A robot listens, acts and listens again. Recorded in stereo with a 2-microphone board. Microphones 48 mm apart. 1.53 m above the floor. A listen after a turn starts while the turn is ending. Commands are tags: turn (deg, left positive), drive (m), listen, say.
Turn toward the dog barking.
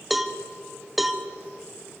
<listen/>
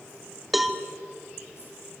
<listen/>
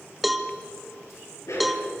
<turn deg="90"/>
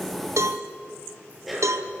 <say>Facing the dog barking.</say>